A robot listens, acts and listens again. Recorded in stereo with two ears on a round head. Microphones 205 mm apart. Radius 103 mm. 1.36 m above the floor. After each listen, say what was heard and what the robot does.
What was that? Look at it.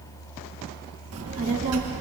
The child speaking: about 65° right or 115° right. Turn 65° right.
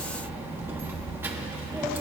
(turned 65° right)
So it is at 10° right. Turn 10° right.
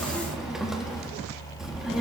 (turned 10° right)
Found it: a child speaking, straight ahead, 1 to 2 m away.